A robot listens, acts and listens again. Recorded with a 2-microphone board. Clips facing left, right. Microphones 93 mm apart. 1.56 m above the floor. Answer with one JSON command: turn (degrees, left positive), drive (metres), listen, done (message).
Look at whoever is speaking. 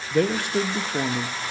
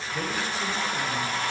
{"turn": 70}
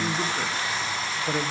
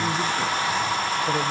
{"listen": true}
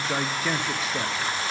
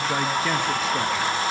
{"done": "Facing the man speaking, under 1 m away."}